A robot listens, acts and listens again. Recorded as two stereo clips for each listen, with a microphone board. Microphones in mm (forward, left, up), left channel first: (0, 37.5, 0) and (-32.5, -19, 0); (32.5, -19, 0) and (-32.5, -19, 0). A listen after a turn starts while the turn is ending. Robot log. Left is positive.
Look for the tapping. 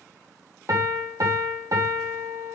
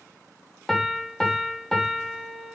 cmd idle
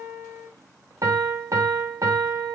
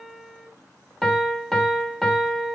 cmd idle
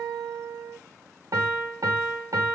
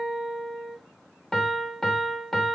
end: I can't make out tapping, only a piano.